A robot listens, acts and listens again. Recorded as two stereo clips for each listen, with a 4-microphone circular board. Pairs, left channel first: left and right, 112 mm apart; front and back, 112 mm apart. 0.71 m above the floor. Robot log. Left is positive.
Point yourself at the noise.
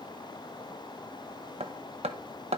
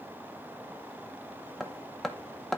note: The hammering: 85° right.
cmd yaw -85
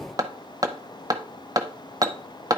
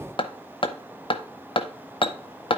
note: The hammering is now 35° right.
cmd yaw -35
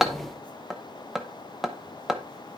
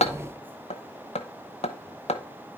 end: Found it: hammering, straight ahead.